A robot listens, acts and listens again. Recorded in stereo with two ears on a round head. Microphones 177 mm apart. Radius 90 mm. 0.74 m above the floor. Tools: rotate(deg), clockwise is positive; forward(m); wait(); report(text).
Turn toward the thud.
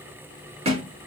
rotate(30)
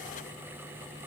wait()
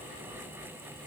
report("I heard a thud, but can't make it out now. It was about straight ahead or 120° right.")